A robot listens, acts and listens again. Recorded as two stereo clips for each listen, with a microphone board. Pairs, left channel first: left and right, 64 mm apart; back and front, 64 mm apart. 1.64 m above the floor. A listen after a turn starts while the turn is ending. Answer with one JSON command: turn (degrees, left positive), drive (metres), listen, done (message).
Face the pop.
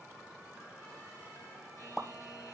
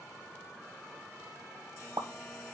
{"done": "Facing the pop, 1 to 2 m away."}